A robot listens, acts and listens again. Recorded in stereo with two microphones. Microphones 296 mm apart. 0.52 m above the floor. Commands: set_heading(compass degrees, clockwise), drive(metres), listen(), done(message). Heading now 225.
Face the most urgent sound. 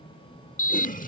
set_heading(175)
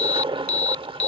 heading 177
set_heading(97)
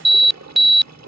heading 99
done("Facing the alarm.")